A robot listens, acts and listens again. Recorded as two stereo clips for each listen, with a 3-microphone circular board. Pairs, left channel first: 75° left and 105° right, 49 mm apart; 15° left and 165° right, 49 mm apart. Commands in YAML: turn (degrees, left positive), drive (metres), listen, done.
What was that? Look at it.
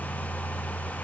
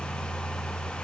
listen: true
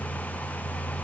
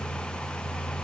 listen: true
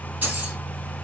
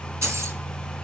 turn: -155
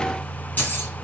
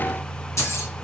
turn: 25
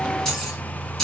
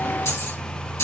turn: -10
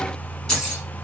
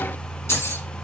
done: "Facing the keys jangling, 2 to 4 m away."